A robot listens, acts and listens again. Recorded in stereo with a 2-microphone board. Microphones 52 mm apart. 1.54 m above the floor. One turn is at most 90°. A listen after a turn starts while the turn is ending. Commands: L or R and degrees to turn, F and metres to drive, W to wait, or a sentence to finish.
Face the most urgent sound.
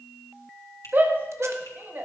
R40
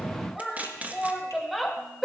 Found it: a shout, straight ahead, 1 to 2 m away.